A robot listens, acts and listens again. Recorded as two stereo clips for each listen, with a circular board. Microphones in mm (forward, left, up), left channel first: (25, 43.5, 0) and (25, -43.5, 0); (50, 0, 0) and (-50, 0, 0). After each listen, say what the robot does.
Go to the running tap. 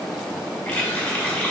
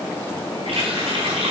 Turn 160° left.
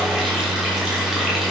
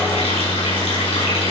Keep listening.
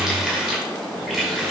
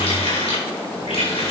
Drive 1.0 m forward.
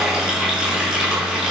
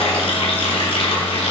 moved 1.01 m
Turn 10° right.
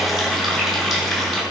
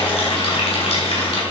Drive 1.0 m forward.
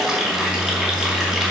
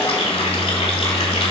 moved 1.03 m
Drive 1.0 m forward.
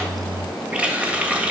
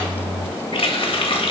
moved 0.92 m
Turn 15° right.
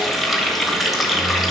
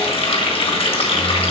Drive 1.0 m forward.
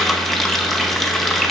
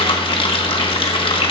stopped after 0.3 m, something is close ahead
I am next to the running tap.